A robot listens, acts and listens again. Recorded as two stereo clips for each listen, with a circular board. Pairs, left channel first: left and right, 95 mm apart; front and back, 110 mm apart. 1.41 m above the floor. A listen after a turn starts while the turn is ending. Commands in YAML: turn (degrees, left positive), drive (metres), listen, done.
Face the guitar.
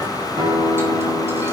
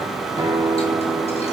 turn: -125
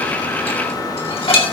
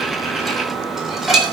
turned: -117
listen: true
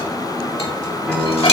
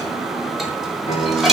done: "Found it: a guitar, straight ahead."